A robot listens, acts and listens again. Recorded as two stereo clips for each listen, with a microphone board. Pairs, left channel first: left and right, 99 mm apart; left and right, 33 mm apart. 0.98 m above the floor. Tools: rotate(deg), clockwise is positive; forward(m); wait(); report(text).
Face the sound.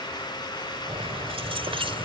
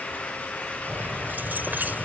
rotate(65)
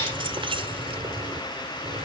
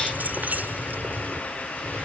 rotate(70)
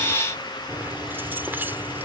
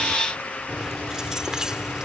rotate(20)
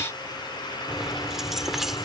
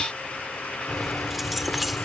report("Facing the keys jangling.")